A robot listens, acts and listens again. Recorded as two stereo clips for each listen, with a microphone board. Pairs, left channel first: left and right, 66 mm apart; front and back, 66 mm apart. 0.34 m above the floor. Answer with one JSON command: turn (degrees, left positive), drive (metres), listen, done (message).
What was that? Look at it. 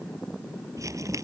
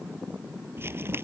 {"turn": -130}
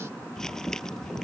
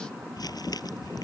{"done": "Facing the crumpling."}